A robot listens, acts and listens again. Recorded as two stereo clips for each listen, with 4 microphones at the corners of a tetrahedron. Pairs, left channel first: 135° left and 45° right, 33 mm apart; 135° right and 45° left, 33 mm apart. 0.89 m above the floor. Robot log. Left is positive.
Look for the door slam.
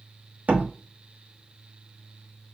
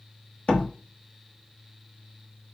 note: The door slam: 85° right.
cmd yaw -85
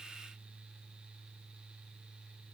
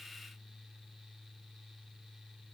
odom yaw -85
end: I heard a door slam from this way, but can't make it out now.